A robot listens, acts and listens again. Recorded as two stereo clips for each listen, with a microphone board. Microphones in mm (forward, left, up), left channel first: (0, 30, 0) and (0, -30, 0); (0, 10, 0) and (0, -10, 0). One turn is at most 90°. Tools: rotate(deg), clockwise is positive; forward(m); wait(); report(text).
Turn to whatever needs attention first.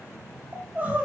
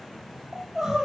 rotate(25)
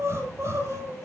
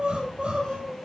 rotate(90)
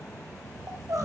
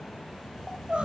rotate(75)
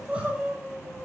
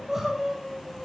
rotate(25)
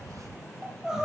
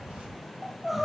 rotate(15)
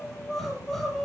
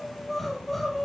report("Facing the crying, over 4 m away.")